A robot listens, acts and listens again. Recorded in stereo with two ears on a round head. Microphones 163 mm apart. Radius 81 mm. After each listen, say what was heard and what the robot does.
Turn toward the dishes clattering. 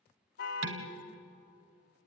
Turn 90° right.
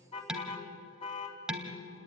Found it: dishes clattering, straight ahead.